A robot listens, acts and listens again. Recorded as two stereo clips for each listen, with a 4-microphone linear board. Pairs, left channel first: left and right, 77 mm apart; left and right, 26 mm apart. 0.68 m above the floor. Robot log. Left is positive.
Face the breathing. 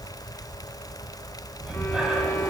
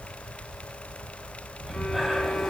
cmd yaw -30
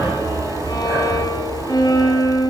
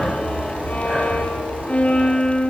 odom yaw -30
note: So it is at 135° right.
cmd yaw -135
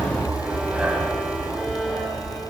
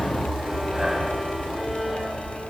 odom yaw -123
note: The breathing is now 15° right.
cmd yaw -15
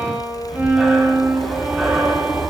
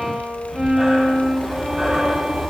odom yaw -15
end: Found it: breathing, straight ahead, over 4 m away.